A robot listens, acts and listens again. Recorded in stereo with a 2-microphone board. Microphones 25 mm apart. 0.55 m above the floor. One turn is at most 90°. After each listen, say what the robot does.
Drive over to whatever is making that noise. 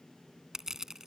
Turn 20° right.
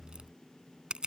Turn 90° right.
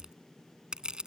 Turn 35° right.
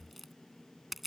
Drive 1.0 m forward.
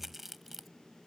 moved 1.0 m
Turn 10° right.
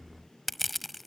Drive 1.0 m forward.
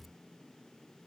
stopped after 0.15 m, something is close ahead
Keep listening.
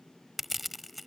I am next to the crushing.